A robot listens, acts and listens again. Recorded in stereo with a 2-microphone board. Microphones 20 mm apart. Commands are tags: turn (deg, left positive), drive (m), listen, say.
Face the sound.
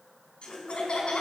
<turn deg="60"/>
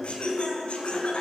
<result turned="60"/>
<turn deg="60"/>
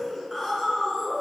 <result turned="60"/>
<say>Found it: laughter, straight ahead.</say>